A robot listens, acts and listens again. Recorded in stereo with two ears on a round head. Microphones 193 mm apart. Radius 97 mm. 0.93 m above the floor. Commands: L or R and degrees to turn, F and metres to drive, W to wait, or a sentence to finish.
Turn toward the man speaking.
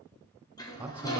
R30
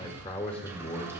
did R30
L30
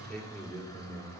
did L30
L10
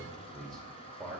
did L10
Found it: a man speaking, straight ahead, 2 to 4 m away.